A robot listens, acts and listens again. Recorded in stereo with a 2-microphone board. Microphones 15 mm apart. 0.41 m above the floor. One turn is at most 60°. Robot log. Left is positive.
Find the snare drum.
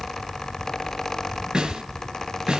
cmd yaw -60
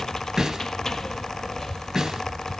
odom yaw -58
note: So it is at 30° right.
cmd yaw -30
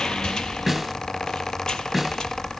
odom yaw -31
end: Facing the snare drum, 1 to 2 m away.